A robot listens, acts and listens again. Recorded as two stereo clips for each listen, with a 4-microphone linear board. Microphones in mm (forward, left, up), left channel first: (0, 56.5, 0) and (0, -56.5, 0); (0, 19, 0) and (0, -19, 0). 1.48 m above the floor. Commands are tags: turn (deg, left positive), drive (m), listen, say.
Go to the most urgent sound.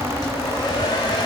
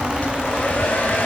<listen/>
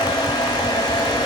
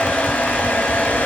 <listen/>
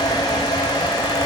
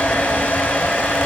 <say>I can't make out anything urgent, only a hair dryer.</say>